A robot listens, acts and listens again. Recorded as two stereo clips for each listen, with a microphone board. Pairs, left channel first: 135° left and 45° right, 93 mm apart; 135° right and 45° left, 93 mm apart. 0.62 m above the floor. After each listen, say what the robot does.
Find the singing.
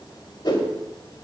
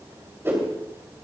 Keep listening.
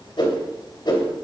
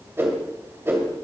Keep listening.
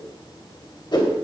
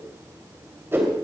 I can't make out singing to turn to.